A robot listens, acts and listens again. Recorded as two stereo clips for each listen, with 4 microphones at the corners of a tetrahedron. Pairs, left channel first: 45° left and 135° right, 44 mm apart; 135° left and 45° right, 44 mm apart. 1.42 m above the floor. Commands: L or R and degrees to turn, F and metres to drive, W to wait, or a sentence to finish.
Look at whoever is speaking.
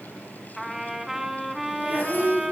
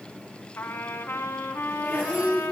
R160
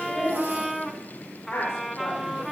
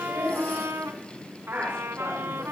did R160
L15
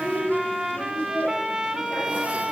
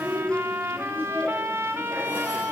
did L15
Found it: a woman speaking, straight ahead, over 4 m away.